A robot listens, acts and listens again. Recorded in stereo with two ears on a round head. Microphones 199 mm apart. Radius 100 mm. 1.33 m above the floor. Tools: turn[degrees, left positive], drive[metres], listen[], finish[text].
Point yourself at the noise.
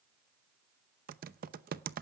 Thought: The typing on a keyboard: about 40° right or 140° right.
Action: turn[-40]
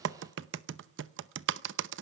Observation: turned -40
Thought: So it is at 85° right.
Action: turn[-85]
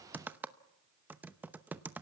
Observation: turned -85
Thought: The typing on a keyboard is now 10° right.
Action: turn[-10]
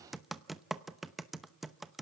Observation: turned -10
Action: finish[Found it: typing on a keyboard, straight ahead, under 1 m away.]